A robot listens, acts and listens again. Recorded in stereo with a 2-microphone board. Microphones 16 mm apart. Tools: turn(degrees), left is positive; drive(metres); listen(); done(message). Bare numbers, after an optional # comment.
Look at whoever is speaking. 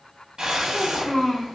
# The child speaking: about 45° left or 135° left.
turn(45)
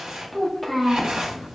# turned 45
# So it is at 10° left.
turn(10)
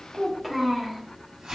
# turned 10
done("Facing the child speaking.")